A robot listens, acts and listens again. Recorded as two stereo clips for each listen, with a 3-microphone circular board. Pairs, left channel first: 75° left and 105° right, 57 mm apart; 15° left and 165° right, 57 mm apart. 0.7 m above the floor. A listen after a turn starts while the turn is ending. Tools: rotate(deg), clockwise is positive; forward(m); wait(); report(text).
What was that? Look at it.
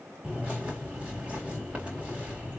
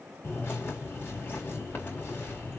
rotate(35)
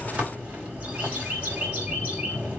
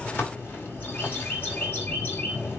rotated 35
rotate(40)
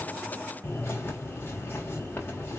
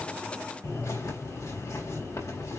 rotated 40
rotate(-25)
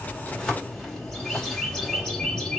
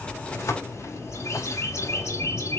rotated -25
report("Facing the bird, 2 to 4 m away.")